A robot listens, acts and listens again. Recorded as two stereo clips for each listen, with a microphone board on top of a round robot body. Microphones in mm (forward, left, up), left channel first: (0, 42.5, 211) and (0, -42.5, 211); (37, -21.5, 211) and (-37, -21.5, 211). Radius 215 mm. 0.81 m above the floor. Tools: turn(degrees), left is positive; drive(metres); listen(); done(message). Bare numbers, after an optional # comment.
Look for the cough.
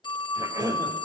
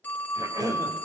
# The cough: 140° right.
turn(-140)
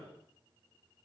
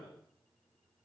listen()
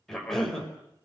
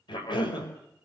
done("Found it: a cough, straight ahead.")